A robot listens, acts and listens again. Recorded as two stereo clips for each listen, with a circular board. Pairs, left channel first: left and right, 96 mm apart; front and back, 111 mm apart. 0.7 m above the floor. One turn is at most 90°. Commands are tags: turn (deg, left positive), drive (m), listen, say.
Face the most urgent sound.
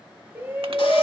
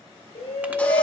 <turn deg="-20"/>
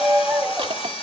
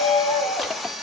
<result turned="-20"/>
<say>Found it: a shout, straight ahead, 2 to 4 m away.</say>